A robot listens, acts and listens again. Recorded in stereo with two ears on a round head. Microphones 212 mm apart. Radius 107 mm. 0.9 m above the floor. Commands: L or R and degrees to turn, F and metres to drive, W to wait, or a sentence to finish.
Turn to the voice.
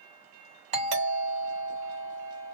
W
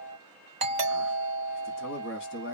L50
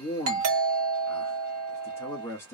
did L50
L10
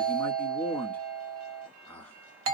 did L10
L10
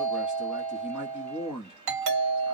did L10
Facing the man speaking.